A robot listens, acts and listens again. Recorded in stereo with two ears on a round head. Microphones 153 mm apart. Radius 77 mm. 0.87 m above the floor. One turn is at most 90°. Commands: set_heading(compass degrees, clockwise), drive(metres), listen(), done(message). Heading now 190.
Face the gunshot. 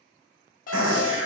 set_heading(280)
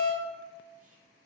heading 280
done("I heard a gunshot from this way, but can't make it out now.")